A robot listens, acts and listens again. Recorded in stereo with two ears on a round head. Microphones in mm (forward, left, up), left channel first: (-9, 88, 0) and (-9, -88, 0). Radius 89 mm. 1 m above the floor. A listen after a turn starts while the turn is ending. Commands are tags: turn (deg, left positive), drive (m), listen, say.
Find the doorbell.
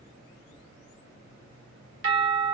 <turn deg="-65"/>
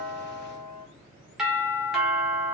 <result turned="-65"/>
<say>Facing the doorbell, 1 to 2 m away.</say>